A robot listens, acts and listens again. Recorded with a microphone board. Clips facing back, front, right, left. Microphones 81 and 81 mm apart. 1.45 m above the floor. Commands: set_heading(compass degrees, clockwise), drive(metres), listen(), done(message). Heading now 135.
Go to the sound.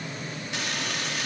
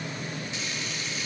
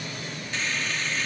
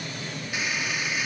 set_heading(325)
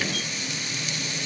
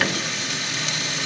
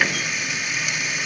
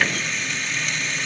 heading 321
drive(1.0)
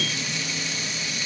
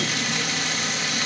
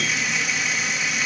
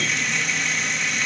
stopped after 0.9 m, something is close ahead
done("Something is in my way. I am facing the frying but have not reached it.")